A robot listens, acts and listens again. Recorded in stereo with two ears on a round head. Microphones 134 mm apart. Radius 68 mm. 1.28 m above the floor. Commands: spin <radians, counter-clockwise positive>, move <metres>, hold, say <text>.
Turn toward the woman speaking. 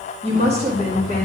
spin -0.87
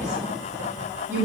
spin -0.26
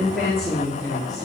say Facing the woman speaking, 2 to 4 m away.